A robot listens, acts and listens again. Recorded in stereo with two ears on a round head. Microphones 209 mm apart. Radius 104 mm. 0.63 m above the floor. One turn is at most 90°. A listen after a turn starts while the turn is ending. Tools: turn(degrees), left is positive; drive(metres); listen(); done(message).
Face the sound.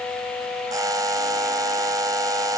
turn(degrees=-15)
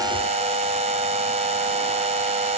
turn(degrees=-90)
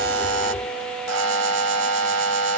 turn(degrees=-90)
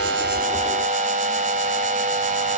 turn(degrees=-35)
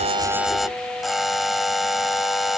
done("Found it: a buzzer, straight ahead.")